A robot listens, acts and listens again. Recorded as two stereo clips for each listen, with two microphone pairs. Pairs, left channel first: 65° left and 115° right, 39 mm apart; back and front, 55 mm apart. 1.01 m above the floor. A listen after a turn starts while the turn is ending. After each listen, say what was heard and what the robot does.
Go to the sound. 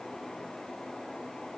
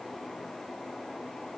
Keep listening.
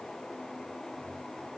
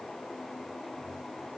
Keep listening.
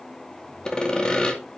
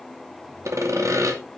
Drive 1.0 m forward.
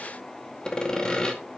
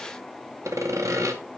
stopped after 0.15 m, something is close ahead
Something is in my way. I am facing the sawing but have not reached it.